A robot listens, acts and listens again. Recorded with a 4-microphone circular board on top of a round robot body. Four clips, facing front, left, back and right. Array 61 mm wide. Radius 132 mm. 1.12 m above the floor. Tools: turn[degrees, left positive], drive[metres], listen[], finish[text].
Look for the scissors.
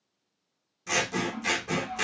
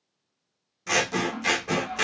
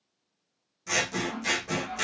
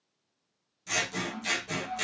Thought: The scissors: 85° left.
Action: turn[85]
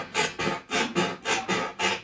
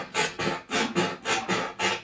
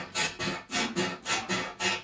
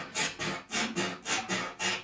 Thought: The scissors is now 45° left.
Action: turn[45]
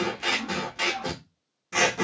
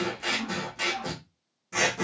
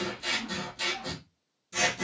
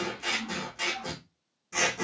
Thought: The scissors is now 10° left.
Action: turn[10]
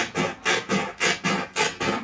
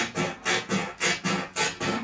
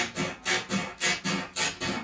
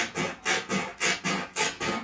Action: finish[Facing the scissors.]